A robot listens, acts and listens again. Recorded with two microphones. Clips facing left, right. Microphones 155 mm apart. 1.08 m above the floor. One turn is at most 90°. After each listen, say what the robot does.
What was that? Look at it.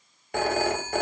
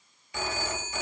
Turn 65° left.
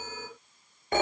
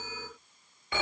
Turn 50° left.
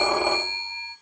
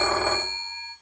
Turn 15° left.
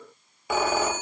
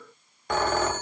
Facing the phone ringing.